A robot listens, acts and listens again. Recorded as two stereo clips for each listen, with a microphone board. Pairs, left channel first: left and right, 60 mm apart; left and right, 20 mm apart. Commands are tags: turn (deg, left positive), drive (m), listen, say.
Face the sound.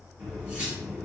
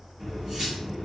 <turn deg="-20"/>
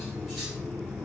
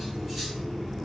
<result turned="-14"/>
<say>Facing the cutlery clinking.</say>